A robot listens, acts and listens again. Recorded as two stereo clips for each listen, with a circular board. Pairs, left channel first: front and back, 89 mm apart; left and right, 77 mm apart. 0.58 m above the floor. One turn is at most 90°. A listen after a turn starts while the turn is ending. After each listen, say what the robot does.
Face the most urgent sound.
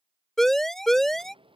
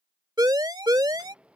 Turn 85° right.
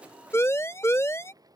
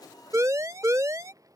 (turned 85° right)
Turn 50° right.
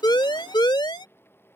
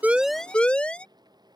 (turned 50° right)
Turn 15° left.
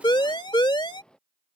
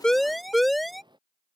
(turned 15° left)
Found it: a siren, straight ahead.